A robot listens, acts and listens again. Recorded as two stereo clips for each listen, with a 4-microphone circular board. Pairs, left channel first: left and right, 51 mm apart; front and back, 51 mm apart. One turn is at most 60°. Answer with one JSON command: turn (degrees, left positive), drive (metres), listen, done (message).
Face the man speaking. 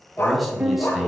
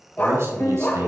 {"turn": -60}
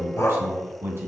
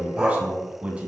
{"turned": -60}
{"turn": -60}
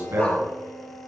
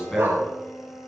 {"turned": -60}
{"turn": -60}
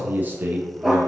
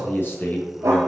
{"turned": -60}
{"turn": -40}
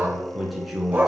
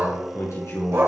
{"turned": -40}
{"done": "Facing the man speaking, over 4 m away."}